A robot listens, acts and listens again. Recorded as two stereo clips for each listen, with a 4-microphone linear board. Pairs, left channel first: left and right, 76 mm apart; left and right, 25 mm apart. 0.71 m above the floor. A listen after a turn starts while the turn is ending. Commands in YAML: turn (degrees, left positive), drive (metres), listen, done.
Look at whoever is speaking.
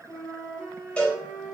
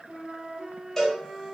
listen: true
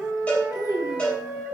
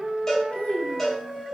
turn: 55
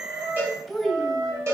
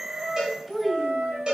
done: "Found it: a child speaking, straight ahead."